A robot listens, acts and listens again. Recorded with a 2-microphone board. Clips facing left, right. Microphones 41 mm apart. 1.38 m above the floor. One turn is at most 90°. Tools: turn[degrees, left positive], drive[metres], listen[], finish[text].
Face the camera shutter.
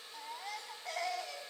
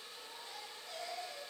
Action: listen[]
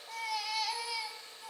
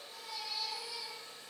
Action: listen[]
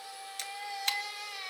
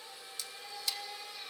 Thought: The camera shutter: about 45° left or 135° left.
Action: turn[45]
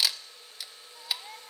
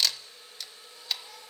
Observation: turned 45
Action: finish[Facing the camera shutter.]